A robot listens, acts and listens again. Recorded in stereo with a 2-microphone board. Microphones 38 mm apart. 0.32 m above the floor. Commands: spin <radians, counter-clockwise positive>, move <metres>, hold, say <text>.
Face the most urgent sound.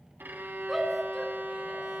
spin 0.52
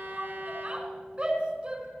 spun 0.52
spin -0.52
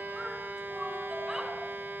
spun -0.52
hold
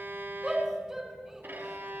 spin -0.26
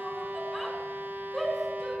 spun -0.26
say Facing the shout, 2 to 4 m away.